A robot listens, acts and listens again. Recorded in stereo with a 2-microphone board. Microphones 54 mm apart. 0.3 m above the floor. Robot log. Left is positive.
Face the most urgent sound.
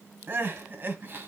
note: The crying: about 40° right or 140° right.
cmd yaw -40
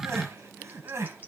note: So it is at 95° right.
cmd yaw -95
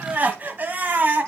note: The crying is now 40° right.
cmd yaw -40
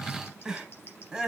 note: The crying is now 15° right.
cmd yaw -15
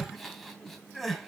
end: Found it: crying, straight ahead, 1 to 2 m away.